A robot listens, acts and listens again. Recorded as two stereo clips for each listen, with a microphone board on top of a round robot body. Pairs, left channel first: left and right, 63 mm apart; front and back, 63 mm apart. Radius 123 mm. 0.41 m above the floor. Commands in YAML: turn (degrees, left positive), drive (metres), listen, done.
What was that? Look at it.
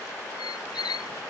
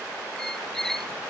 turn: 85
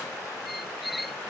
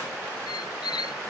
done: "Facing the squeak."